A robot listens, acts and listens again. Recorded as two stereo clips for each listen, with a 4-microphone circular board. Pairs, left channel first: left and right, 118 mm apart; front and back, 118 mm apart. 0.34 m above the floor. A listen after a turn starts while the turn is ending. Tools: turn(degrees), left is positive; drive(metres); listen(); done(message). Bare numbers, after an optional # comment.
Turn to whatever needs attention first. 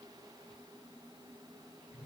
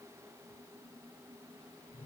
listen()
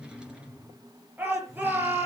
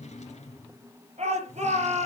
# The shout: 165° right.
turn(-165)
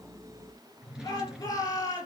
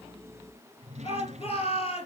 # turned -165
# The shout is now 30° left.
turn(30)
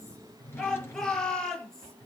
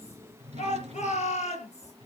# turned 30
done("Found it: a shout, straight ahead.")